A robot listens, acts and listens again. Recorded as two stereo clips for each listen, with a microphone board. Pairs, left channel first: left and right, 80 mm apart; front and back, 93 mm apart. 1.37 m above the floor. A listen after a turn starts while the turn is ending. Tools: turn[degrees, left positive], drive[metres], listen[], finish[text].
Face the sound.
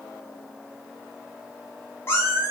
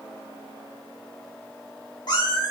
Thought: The cat meowing: 30° left.
Action: turn[30]
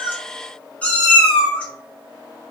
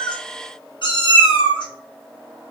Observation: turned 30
Thought: The cat meowing is now 15° left.
Action: turn[15]
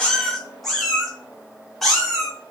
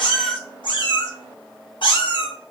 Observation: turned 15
Action: finish[Found it: a cat meowing, straight ahead, 1 to 2 m away.]